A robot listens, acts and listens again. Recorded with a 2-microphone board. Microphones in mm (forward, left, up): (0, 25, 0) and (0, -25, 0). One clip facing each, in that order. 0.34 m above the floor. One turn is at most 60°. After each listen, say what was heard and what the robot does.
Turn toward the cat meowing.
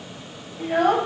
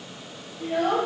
Keep listening.
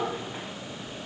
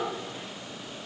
Keep listening.
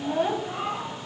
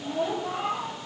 Turn 30° left.
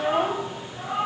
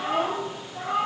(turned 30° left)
So it is at 40° right. Turn 40° right.
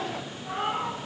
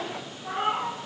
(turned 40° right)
The cat meowing is now 25° right. Turn 25° right.
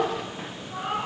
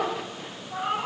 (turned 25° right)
The cat meowing is now 15° right. Turn 15° right.
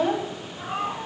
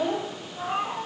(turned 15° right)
Found it: a cat meowing, straight ahead.